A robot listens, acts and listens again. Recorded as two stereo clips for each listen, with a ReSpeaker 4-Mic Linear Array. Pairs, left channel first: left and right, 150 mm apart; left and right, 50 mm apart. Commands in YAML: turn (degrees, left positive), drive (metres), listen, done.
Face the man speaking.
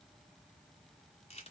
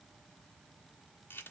listen: true
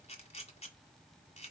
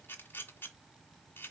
listen: true
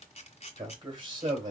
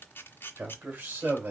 turn: -35
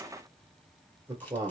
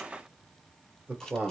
turn: -25
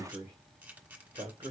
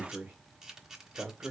turn: -30
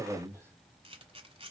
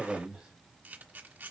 turn: -15
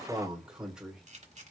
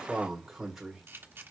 done: "Facing the man speaking, 1 to 2 m away."